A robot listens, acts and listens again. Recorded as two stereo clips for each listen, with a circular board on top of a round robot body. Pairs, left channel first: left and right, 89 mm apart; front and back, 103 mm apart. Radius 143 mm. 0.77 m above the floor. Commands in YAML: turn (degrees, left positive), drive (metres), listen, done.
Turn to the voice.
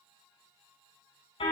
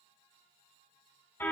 listen: true
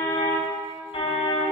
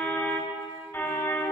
listen: true
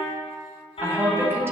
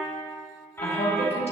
turn: -25
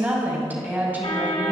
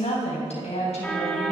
turn: -20
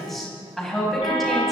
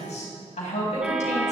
done: "Facing the woman speaking."